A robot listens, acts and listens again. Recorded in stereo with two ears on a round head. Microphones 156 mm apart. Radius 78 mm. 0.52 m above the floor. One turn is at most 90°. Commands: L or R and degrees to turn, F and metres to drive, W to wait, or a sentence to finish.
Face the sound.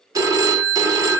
R20
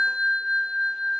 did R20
Found it: a phone ringing, straight ahead.